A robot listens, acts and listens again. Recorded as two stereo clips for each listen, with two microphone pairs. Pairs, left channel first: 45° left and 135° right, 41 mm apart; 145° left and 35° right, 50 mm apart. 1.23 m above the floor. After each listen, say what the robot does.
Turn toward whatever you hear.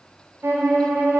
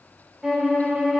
Turn 110° right.
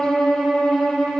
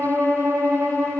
Turn 30° right.
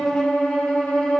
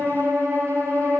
Turn 15° right.
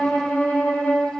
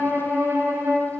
Found it: a violin, straight ahead.